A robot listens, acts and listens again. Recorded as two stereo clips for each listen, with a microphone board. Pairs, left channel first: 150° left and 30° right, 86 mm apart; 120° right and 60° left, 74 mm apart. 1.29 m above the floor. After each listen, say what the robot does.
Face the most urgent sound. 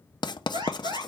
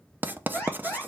Turn 65° right.
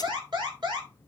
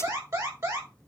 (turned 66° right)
Found it: an alarm, straight ahead, over 4 m away.